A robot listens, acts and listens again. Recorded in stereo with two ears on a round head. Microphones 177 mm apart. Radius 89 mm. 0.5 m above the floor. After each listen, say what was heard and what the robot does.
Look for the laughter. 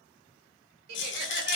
The laughter: about 50° right or 130° right. Turn 50° right.
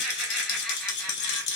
Keep listening.
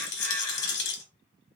Keep listening.
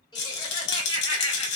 So it is at 30° left. Turn 30° left.
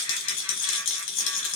Keep listening.
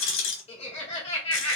The laughter is now 30° left. Turn 30° left.
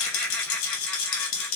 The laughter is now 10° left. Turn 10° left.
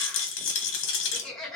Found it: laughter, straight ahead.